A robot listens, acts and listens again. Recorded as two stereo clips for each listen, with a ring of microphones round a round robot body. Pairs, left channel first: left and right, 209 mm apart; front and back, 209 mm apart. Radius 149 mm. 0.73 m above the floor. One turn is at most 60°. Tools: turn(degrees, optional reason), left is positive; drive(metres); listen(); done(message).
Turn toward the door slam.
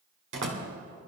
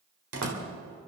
turn(degrees=-60, reason="The door slam: 140° right.")
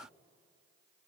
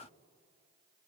turn(degrees=-60, reason="Nothing new. It was at 80° right.")
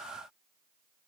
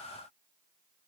turn(degrees=-20, reason="Nothing new. It was at 20° right.")
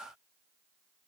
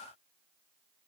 done("Facing where the door slam came from. I can't hear it now.")